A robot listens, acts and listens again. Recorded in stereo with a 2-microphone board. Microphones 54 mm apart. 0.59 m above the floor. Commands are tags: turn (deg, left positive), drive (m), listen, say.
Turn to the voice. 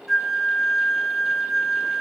<listen/>
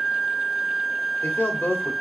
<turn deg="35"/>
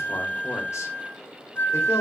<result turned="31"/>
<listen/>
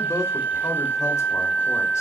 <turn deg="110"/>
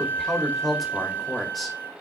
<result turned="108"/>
<say>Facing the man speaking, 2 to 4 m away.</say>